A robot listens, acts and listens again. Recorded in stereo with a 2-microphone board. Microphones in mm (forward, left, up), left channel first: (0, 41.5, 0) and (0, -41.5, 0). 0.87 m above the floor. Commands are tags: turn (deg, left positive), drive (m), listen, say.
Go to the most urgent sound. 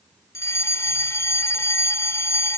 <turn deg="35"/>
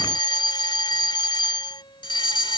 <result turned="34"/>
<turn deg="110"/>
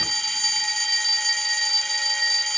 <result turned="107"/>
<drive m="1.0"/>
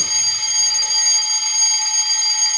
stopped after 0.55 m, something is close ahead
<say>Something is in my way. I am facing the fire alarm but have not reached it.</say>